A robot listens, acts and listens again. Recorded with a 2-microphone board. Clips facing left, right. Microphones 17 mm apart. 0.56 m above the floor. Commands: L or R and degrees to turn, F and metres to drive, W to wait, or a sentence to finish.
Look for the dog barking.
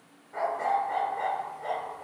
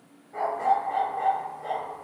L25
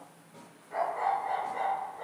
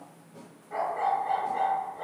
Found it: a dog barking, straight ahead, 1 to 2 m away.